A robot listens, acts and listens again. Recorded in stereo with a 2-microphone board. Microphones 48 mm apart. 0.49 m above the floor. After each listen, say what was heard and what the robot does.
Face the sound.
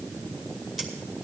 Turn 30° right.
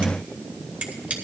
So it is at 145° right. Turn 145° right.
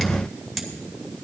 Found it: scissors, straight ahead, 2 to 4 m away.